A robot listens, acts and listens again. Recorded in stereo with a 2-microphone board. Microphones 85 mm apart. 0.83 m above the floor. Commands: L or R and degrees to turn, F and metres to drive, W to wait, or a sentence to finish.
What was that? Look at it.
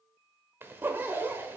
R25
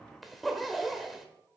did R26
Found it: a zipper, straight ahead.